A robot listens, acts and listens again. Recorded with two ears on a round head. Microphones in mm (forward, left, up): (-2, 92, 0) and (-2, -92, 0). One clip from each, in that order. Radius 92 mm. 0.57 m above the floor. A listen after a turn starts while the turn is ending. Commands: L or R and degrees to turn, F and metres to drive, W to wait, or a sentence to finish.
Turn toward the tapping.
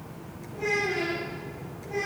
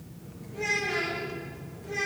W
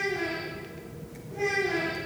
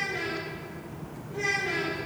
W
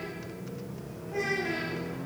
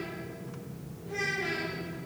I can't make out tapping to turn to.